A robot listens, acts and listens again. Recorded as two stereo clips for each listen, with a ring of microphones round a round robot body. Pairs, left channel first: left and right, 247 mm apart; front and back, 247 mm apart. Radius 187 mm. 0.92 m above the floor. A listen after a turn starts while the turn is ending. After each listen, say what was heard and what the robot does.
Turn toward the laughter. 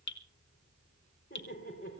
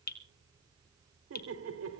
The laughter: 155° left. Turn 155° left.
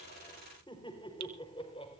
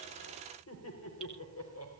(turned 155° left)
The laughter is now 20° left. Turn 20° left.
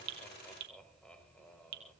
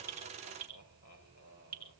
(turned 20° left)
Found it: laughter, straight ahead, over 4 m away.